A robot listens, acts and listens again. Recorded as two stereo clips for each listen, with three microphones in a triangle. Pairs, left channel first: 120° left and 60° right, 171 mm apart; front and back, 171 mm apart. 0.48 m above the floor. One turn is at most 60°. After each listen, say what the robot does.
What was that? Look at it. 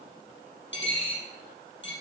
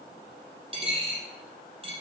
Turn 60° left.
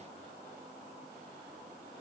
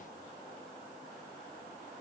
Turn 60° left.
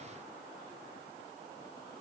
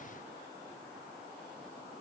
Facing where the dropped coin came from. I can't hear it now.